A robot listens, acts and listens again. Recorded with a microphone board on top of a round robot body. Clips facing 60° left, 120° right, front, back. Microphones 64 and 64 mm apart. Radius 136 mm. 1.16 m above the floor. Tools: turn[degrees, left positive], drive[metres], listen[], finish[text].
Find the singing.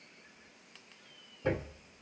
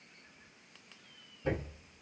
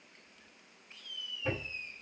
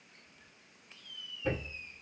Action: listen[]
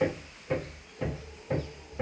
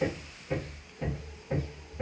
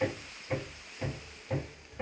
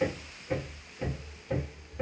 Action: listen[]
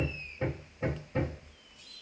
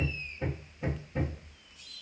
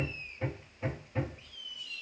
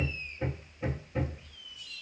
Action: finish[I can't make out singing to turn to.]